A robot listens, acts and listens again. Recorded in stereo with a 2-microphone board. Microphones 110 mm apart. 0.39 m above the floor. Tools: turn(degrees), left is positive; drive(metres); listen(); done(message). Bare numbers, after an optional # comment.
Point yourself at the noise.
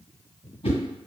# The whoosh: about 65° left or 115° left.
turn(65)
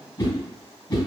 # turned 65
# So it is at 40° left.
turn(40)
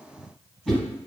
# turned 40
done("Found it: a whoosh, straight ahead, 1 to 2 m away.")